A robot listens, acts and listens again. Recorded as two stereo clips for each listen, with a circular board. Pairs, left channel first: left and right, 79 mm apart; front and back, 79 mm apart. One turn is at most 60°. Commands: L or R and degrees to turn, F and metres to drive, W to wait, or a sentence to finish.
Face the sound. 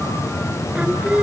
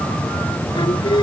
R15
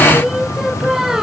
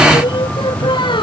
Facing the singing.